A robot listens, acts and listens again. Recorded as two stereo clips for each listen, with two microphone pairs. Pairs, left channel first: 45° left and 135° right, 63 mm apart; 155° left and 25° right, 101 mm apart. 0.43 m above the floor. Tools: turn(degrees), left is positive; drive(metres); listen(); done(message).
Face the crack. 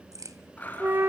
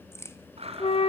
turn(degrees=-140)
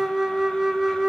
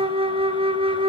done("I heard a crack from this way, but can't make it out now.")